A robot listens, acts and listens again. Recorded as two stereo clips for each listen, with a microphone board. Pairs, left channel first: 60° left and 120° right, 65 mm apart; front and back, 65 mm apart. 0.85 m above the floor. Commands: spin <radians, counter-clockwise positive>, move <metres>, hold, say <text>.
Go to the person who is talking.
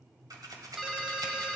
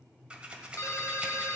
hold
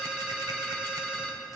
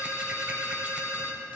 hold
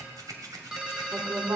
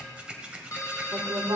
spin -2.79
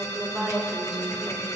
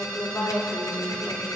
spin -0.52
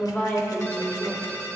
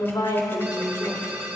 move 1.0
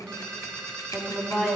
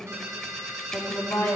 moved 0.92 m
spin -0.17
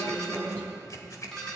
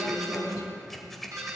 move 1.0
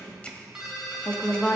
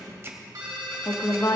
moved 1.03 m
move 1.0
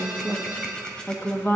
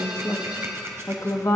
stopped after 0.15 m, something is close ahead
say I am next to the woman speaking.